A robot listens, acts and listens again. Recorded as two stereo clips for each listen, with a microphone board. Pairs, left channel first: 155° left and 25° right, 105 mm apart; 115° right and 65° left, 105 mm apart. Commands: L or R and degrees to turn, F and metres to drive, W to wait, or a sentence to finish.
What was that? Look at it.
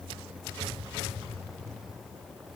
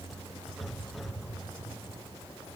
W
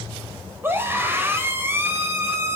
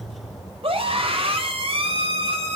L45
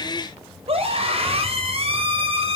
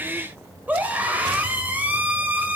Facing the scream.